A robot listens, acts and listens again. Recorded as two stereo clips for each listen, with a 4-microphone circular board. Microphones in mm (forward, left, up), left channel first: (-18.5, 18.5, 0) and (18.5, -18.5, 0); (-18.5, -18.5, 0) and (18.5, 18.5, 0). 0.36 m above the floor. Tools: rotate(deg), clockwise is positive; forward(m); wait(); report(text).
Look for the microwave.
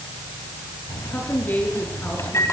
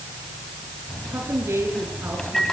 rotate(-145)
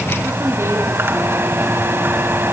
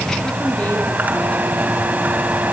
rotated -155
rotate(10)
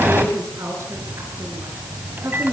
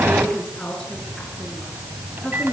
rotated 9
report("Found it: a microwave, straight ahead, 2 to 4 m away.")